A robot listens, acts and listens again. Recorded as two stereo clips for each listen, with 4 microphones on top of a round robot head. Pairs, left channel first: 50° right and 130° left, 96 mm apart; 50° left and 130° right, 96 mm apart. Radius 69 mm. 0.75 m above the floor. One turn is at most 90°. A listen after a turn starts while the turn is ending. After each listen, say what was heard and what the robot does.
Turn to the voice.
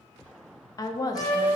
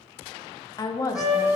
Facing the woman speaking.